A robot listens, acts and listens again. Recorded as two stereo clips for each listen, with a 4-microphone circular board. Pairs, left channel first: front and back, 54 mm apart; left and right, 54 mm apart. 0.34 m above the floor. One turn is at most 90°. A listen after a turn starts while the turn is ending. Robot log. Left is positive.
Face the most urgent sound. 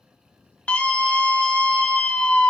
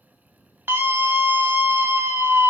note: The scream: 60° right.
cmd yaw -60
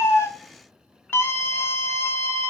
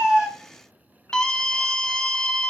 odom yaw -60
note: The scream is now 15° left.
cmd yaw +15
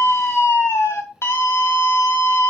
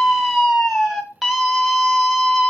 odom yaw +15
end: Found it: a scream, straight ahead.